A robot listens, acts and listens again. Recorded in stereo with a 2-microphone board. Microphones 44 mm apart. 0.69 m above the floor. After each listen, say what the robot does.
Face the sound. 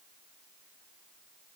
Keep listening.
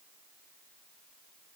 Keep listening.
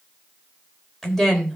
Turn 30° left.
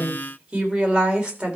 Turn 25° right.
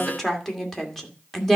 Found it: a woman speaking, straight ahead.